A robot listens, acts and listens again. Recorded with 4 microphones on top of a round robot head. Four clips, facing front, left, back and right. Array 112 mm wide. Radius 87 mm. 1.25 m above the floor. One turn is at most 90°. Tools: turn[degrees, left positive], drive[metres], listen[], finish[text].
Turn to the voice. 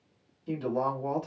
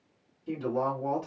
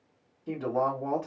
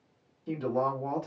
Thought: The woman speaking: 150° right.
Action: turn[-90]
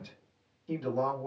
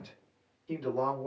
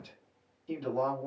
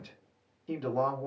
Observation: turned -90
Thought: The woman speaking is now 95° right.
Action: turn[-90]
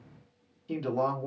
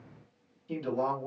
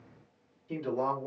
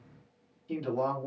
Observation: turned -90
Action: finish[Found it: a woman speaking, straight ahead, 1 to 2 m away.]